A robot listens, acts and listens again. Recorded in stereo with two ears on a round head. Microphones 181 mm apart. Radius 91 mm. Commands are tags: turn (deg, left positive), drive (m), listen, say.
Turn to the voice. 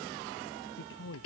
<turn deg="60"/>
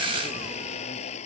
<listen/>
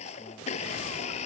<listen/>
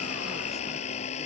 <say>I heard a man speaking, but can't make it out now. It was about straight ahead or 60° left.</say>